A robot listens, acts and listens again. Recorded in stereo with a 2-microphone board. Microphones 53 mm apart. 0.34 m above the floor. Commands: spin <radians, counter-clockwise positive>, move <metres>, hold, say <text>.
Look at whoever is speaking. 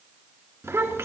spin -1.05
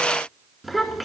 say Facing the child speaking, 2 to 4 m away.